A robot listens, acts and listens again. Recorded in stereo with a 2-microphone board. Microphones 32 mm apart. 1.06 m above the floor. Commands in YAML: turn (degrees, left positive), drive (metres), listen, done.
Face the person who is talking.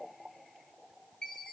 listen: true
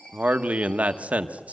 turn: -45
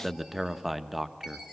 done: "Found it: a man speaking, straight ahead, under 1 m away."